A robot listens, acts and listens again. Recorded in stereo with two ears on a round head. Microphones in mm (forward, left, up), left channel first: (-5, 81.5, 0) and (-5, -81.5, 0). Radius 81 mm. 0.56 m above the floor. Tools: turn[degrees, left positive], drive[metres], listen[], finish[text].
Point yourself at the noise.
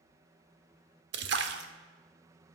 Thought: The splash: about 65° right or 115° right.
Action: turn[-65]
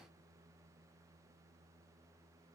Action: listen[]
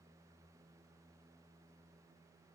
Action: finish[I heard a splash, but can't make it out now. It was about straight ahead or 50° right.]